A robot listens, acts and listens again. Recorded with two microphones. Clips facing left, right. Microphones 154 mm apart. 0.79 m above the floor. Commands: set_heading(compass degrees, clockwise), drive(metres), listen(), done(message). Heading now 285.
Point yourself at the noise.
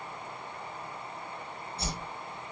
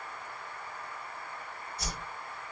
set_heading(255)
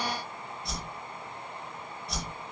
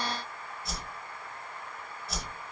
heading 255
done("Facing the whoosh.")